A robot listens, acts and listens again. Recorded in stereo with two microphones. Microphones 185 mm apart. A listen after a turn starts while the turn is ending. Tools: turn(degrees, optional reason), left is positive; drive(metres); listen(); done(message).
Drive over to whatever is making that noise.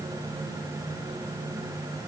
listen()
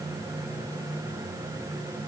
listen()
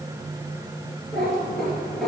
turn(degrees=30)
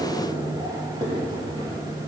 turn(degrees=-30, reason="So it is at 30° right.")
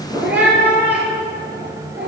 turn(degrees=-10, reason="The cat meowing is now 10° right.")
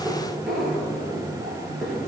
drive(metres=1.0)
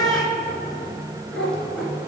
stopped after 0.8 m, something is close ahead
done("I am next to the cat meowing.")